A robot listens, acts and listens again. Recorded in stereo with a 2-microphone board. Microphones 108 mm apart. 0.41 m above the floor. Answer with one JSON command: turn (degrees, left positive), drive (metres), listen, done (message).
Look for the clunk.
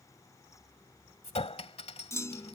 {"turn": 25}
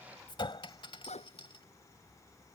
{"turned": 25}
{"listen": true}
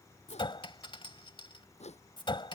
{"done": "I heard a clunk, but can't make it out now. It was about straight ahead or 130° left."}